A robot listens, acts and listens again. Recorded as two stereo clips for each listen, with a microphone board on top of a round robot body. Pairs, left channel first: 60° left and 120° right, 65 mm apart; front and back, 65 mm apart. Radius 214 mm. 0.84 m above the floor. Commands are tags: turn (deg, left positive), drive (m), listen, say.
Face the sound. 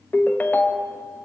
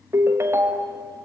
<turn deg="125"/>
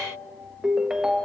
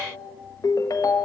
<turn deg="-35"/>
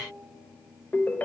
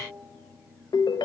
<say>Facing the ringtone.</say>